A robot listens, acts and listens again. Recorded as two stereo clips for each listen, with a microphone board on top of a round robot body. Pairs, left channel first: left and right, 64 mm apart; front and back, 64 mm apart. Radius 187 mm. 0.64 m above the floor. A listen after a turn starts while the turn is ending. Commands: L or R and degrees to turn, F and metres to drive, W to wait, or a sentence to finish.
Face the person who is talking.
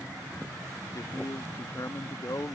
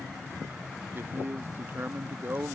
L125
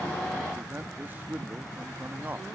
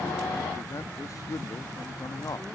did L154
R30
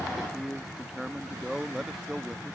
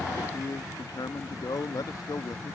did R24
Found it: a man speaking, straight ahead.